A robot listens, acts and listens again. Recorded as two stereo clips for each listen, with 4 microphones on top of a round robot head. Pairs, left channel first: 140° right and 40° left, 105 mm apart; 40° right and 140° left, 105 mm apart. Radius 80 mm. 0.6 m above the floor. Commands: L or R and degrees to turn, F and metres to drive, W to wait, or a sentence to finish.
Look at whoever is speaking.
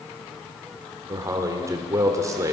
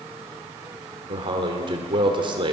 L100
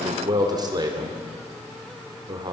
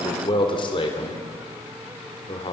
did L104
Facing the man speaking.